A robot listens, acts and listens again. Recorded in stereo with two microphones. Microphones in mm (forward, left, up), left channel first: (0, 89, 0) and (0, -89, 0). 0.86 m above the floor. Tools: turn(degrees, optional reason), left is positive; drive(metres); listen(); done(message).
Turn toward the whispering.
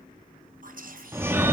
turn(degrees=-55, reason="The whispering: about 55° right or 125° right.")
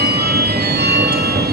listen()
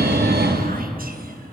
listen()
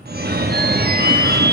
done("I heard whispering, but can't make it out now. It was about straight ahead or 70° right.")